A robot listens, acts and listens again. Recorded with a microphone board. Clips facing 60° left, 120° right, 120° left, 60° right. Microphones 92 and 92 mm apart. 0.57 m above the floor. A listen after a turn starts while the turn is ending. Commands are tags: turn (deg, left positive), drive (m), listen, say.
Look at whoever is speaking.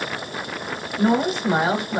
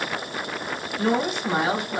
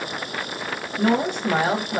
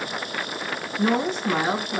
<turn deg="115"/>
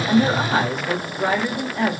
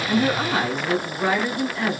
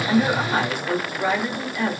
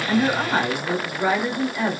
<turn deg="15"/>
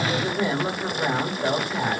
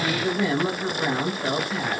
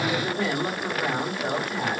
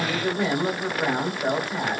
<say>Facing the woman speaking, 1 to 2 m away.</say>